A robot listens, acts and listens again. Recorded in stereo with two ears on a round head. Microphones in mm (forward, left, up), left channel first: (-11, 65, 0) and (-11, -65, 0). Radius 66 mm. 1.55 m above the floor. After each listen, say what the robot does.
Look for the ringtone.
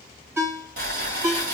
Turn 20° right.
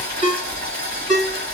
Turn 140° right.
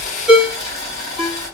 Found it: a ringtone, straight ahead.